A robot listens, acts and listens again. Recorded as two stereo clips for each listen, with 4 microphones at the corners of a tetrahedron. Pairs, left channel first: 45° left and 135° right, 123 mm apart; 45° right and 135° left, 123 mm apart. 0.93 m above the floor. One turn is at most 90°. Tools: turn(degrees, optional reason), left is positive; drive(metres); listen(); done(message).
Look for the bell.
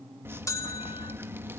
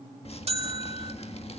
turn(degrees=90, reason="The bell: 105° left.")
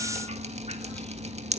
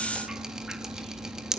turn(degrees=15, reason="Nothing new. It was at 15° left.")
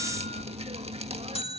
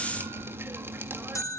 turn(degrees=20, reason="The bell is now 20° left.")
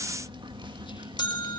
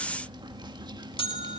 done("Found it: a bell, straight ahead.")